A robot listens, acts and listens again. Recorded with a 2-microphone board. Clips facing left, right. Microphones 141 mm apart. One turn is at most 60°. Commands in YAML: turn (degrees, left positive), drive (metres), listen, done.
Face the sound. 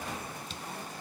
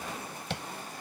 turn: -60
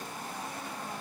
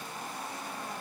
turn: -30
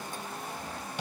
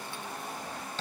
turn: 15
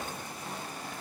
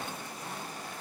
listen: true
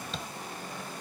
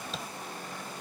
done: "Facing the tapping."